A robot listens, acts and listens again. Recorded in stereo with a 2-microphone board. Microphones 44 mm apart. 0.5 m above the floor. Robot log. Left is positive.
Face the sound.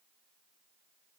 cmd idle
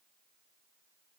cmd idle
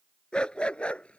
note: The dog barking: about 25° left or 155° left.
cmd yaw +25
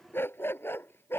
note: So it is at 115° left.
cmd yaw +115
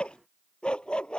note: The dog barking is now 20° left.
cmd yaw +20
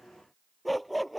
end: Found it: a dog barking, straight ahead.